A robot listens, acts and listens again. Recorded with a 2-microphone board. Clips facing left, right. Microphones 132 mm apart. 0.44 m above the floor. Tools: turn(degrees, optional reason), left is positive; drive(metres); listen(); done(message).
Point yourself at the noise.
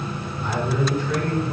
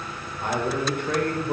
turn(degrees=-55, reason="The man speaking: about 55° right or 125° right.")
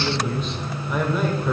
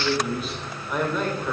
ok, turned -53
turn(degrees=10, reason="So it is at 10° left.")
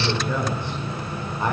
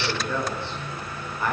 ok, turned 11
turn(degrees=25, reason="The man speaking is now 25° left.")
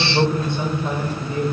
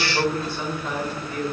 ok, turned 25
turn(degrees=25, reason="The man speaking is now 25° left.")
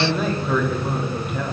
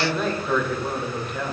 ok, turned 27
done("Found it: a man speaking, straight ahead, 2 to 4 m away.")